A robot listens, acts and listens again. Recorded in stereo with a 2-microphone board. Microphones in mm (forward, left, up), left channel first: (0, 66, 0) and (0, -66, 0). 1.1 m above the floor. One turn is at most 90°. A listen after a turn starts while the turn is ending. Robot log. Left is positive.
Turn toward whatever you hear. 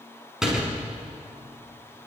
cmd yaw -30
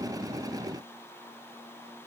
cmd idle
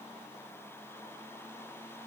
end: I heard a door slam, but can't make it out now. It was about 25° left or 145° right.